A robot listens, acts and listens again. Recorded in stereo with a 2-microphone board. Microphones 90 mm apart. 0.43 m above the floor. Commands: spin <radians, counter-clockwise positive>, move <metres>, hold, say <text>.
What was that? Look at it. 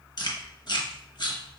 spin 0.96
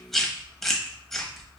say Facing the chewing, 1 to 2 m away.